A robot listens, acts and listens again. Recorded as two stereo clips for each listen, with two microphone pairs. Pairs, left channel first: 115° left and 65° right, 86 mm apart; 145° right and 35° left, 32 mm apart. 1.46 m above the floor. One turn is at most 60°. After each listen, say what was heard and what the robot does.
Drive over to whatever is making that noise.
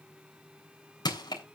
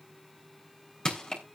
The crushing: 145° left. Turn 60° left.
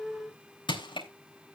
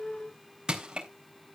The crushing is now 100° left. Turn 60° left.
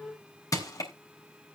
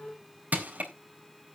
The crushing is now 65° left. Turn 60° left.
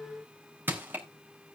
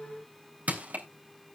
Drive 1.0 m forward.
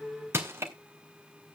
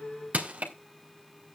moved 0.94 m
The crushing is now 10° right. Turn 10° right.
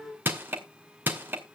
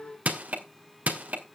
Drive 1.0 m forward.
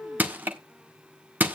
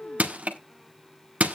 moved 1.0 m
Drive 1.0 m forward.
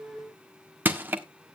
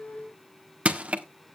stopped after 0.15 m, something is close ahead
Arrived at the crushing, straight ahead.